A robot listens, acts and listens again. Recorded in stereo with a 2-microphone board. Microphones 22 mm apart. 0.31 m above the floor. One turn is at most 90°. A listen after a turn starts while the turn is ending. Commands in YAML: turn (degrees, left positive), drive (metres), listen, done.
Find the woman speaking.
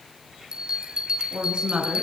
turn: -55
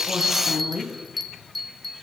turn: -65
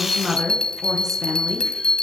turn: -10
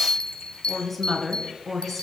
done: "Found it: a woman speaking, straight ahead, over 4 m away."